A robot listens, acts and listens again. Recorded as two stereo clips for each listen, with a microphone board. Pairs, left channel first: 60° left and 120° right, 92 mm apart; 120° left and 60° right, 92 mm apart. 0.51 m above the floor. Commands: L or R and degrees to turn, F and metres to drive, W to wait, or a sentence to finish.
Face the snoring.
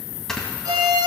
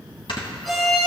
L145
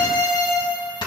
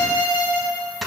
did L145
L30
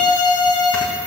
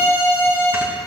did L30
W
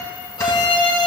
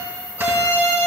W
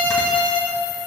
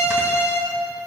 I heard snoring from this way, but can't make it out now.